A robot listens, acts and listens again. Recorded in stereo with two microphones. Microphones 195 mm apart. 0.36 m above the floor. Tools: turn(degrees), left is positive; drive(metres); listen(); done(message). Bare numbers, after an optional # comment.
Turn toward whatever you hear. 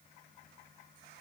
listen()
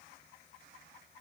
listen()
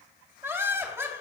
turn(-30)
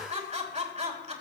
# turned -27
# So it is at 140° right.
turn(-140)
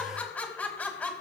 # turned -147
# The laughter is now 10° left.
turn(10)
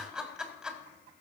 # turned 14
done("Found it: laughter, straight ahead, 2 to 4 m away.")